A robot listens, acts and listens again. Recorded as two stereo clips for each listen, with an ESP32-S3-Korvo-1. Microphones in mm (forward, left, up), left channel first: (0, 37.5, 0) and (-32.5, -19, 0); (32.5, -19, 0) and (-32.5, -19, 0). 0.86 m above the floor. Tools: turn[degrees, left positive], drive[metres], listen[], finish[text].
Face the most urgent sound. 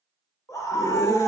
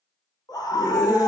Thought: The scream: 25° left.
Action: turn[25]
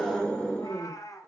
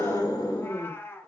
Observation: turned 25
Thought: The scream is now 15° right.
Action: turn[-15]
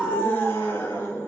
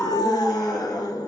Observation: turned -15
Action: finish[Found it: a scream, straight ahead.]